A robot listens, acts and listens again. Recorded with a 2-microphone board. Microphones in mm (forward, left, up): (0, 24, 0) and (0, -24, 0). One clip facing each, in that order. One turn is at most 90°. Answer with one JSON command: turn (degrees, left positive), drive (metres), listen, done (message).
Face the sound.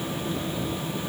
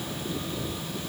{"listen": true}
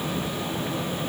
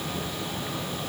{"listen": true}
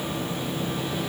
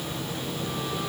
{"done": "I can't make out anything to turn to."}